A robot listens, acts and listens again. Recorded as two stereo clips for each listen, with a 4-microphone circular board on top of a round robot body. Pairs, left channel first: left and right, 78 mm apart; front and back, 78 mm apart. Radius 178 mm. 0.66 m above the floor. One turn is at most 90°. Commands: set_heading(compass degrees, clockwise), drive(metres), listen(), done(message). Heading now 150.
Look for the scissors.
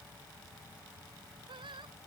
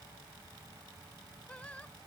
listen()
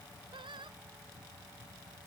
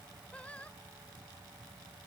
listen()
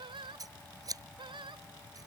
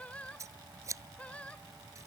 set_heading(240)
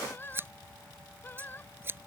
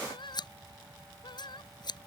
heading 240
set_heading(270)
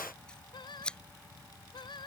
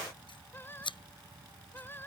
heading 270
set_heading(260)
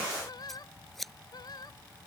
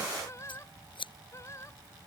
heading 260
done("Found it: scissors, straight ahead.")